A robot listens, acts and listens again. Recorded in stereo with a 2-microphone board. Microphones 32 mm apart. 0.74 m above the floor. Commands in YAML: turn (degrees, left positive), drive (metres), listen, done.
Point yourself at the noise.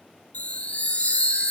turn: 50
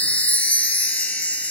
turn: 70
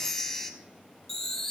turn: 15
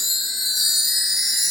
done: "Found it: a chime, straight ahead, under 1 m away."